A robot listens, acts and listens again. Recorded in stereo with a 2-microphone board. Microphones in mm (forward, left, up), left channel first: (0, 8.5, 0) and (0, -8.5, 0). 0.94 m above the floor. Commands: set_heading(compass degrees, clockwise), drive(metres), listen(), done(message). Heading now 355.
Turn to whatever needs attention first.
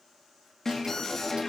set_heading(335)
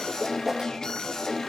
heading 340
set_heading(195)
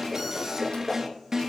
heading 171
set_heading(196)
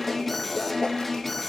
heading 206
set_heading(196)
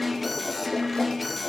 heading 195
done("Found it: an alarm, straight ahead.")